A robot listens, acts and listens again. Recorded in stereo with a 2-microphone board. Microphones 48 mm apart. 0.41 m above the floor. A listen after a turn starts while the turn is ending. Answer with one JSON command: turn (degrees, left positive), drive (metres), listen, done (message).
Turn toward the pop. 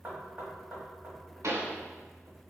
{"turn": -90}
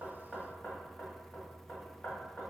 {"done": "Facing where the pop came from. I can't hear it now."}